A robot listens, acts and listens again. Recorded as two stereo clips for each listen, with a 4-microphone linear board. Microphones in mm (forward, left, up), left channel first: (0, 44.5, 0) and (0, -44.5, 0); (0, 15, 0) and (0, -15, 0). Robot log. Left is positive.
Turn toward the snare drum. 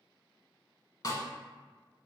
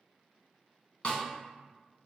note: The snare drum: about 45° left or 135° left.
cmd yaw +45
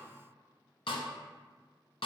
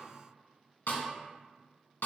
note: So it is at 90° left.
cmd yaw +90
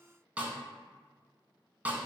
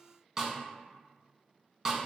note: The snare drum is now 15° right.
cmd yaw -15
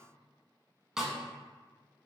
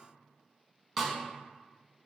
end: Facing the snare drum.